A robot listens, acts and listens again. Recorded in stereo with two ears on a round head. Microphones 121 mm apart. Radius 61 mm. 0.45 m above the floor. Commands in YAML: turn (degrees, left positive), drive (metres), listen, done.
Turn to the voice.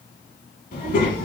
turn: 70
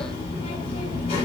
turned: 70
turn: 45
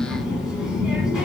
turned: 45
done: "Found it: a child speaking, straight ahead."